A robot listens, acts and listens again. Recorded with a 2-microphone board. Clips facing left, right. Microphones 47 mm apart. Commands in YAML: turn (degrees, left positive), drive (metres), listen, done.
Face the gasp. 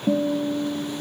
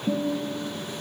listen: true
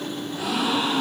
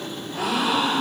turn: -60
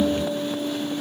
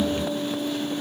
listen: true
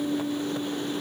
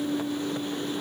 done: "I heard a gasp, but can't make it out now. It was about straight ahead or 60° right."